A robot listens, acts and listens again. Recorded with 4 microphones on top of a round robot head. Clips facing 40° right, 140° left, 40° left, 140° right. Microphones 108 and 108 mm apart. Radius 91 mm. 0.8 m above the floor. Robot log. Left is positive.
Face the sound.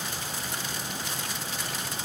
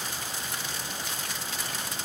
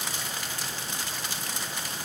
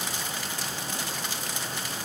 cmd idle
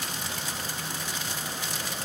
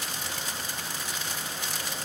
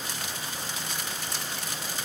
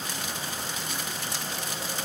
cmd idle
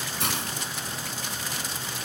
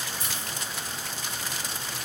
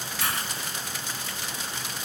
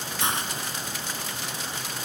note: The hiss: 70° right.
cmd yaw -70
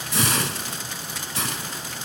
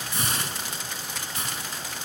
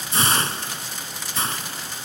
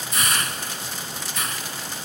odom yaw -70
note: The hiss is now 25° right.
cmd yaw -25
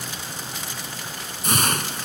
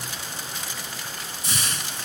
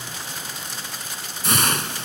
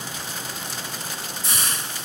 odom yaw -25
end: Facing the hiss.